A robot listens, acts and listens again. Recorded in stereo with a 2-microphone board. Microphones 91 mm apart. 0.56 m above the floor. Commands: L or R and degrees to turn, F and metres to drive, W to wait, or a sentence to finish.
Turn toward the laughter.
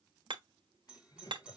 L45
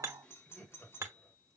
L10
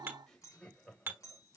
Facing the laughter.